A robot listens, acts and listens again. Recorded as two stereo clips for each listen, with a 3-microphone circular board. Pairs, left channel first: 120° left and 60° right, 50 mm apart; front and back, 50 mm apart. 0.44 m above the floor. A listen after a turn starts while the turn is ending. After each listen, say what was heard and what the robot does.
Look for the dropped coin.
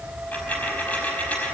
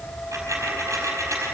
The dropped coin: straight behind. Turn 180° left.
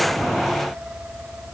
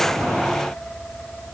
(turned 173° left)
I heard a dropped coin from this way, but can't make it out now.